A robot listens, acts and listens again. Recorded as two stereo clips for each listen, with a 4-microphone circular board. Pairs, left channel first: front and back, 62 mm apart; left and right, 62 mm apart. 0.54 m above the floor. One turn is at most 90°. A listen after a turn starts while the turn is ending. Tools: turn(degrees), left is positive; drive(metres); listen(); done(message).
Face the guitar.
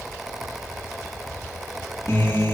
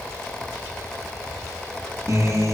turn(degrees=-50)
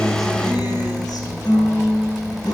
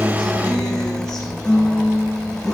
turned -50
turn(degrees=10)
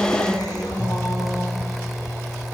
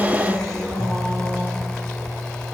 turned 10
done("Found it: a guitar, straight ahead, over 4 m away.")